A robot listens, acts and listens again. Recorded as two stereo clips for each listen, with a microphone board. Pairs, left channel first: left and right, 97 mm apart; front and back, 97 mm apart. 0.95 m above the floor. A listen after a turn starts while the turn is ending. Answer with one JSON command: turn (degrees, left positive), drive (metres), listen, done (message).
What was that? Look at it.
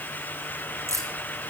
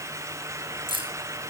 {"turn": -150}
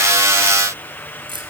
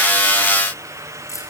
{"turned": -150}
{"turn": -55}
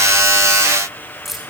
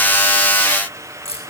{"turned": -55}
{"done": "Facing the keys jangling."}